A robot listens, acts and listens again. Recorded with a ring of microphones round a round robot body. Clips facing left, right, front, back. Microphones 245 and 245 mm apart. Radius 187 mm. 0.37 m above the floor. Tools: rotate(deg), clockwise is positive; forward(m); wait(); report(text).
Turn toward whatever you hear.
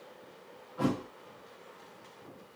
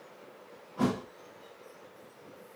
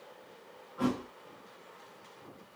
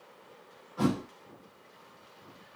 rotate(155)
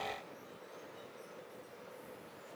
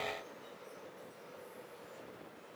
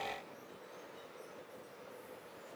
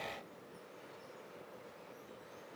report("I heard a thud from this way, but can't make it out now.")